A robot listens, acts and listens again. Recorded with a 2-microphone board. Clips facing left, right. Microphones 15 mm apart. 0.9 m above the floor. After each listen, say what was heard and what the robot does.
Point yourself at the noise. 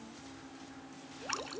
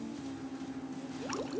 The dripping: about 20° left or 160° left. Turn 20° left.
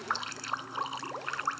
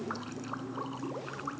So it is at 140° left. Turn 140° left.
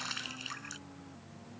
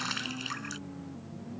The dripping is now 15° right. Turn 15° right.
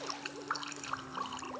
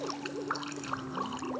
Found it: dripping, straight ahead.